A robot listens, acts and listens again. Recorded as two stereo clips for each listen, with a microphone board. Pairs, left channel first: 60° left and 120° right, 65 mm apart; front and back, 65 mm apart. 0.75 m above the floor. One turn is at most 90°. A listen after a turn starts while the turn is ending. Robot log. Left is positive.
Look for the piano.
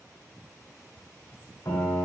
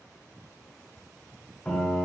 note: The piano: 65° left.
cmd yaw +65
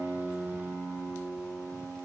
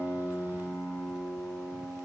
end: Facing the piano.